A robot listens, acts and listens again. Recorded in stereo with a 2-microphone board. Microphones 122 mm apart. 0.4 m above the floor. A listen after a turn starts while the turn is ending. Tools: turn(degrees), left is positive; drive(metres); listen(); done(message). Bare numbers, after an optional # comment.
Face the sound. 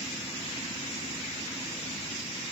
listen()
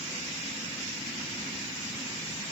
listen()
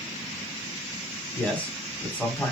turn(30)
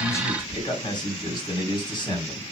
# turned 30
# So it is at 140° left.
turn(140)
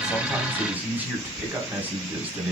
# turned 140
# The man speaking is now 15° right.
turn(-15)
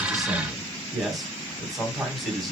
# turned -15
done("Found it: a man speaking, straight ahead, 2 to 4 m away.")